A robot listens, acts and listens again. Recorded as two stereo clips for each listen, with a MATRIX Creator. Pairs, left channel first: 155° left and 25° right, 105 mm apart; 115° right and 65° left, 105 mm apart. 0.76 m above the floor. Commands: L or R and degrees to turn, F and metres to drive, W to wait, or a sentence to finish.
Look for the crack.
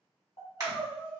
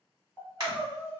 L30
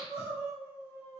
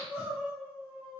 I heard a crack from this way, but can't make it out now.